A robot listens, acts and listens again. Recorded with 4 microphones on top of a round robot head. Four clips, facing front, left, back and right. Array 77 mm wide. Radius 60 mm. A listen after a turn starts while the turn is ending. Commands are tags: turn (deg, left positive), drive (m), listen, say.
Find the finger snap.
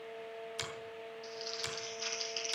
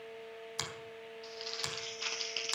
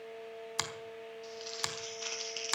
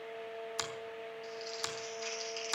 <turn deg="-175"/>
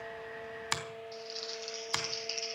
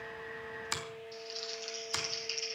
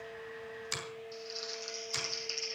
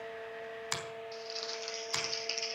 <say>Facing the finger snap.</say>